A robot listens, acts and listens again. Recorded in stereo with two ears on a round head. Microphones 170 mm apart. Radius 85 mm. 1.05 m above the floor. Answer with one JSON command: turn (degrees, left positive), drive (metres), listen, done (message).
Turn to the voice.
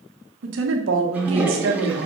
{"turn": -70}
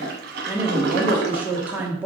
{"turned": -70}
{"turn": -10}
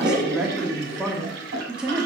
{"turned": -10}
{"done": "Found it: a woman speaking, straight ahead, 1 to 2 m away."}